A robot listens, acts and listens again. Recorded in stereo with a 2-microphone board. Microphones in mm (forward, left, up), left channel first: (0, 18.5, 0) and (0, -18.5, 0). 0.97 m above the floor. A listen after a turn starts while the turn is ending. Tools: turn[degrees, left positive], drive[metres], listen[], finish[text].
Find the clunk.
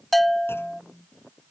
Action: turn[90]
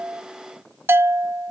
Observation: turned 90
Action: finish[Facing where the clunk came from. I can't hear it now.]